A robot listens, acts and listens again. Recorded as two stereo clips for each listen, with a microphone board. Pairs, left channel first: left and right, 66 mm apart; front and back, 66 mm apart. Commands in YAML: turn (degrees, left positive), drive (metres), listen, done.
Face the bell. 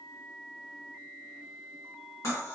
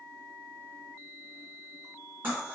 listen: true
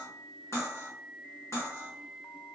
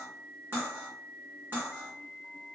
listen: true
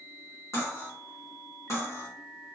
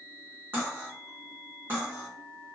done: "I can't make out a bell, only cutlery clinking."